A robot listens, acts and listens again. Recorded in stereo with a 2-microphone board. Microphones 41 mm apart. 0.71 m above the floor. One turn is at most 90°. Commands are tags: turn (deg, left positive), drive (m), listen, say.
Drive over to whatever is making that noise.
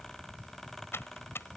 <turn deg="90"/>
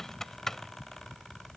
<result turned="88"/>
<turn deg="10"/>
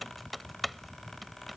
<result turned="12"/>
<drive m="1.0"/>
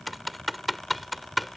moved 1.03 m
<drive m="1.0"/>
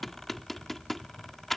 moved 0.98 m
<drive m="1.0"/>
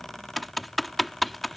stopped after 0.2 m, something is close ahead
<say>I am next to the typing on a keyboard.</say>